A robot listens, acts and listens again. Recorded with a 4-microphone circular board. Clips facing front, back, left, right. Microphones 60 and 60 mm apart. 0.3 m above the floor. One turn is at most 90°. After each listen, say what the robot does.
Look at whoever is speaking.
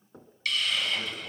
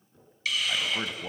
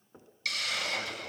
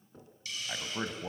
Turn 90° right.
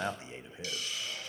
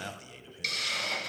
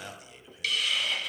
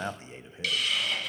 Turn 45° right.
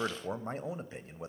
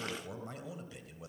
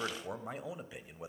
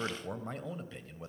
Turn 25° left.
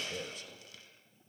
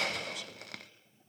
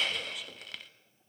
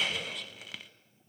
Keep listening.
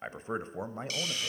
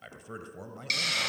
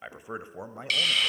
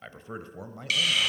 Turn 35° left.
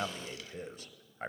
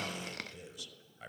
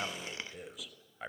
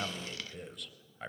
Facing the man speaking, 1 to 2 m away.